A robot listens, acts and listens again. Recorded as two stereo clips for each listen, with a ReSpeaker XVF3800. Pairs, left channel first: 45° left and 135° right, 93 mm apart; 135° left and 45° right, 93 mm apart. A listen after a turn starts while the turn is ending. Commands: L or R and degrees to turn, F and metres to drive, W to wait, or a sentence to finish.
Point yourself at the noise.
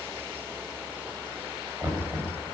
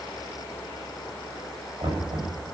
R70
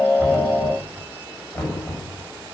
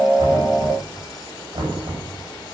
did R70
R20
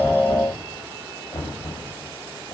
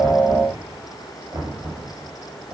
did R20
Found it: knocking, straight ahead.